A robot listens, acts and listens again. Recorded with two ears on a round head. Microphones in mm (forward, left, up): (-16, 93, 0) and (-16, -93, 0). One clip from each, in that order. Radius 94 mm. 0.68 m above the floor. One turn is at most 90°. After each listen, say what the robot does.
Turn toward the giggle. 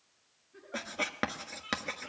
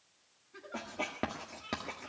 Turn 70° right.
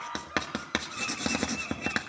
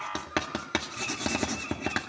Keep listening.
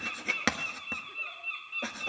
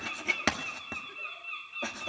Keep listening.
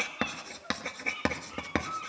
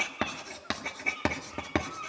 Found it: a giggle, straight ahead.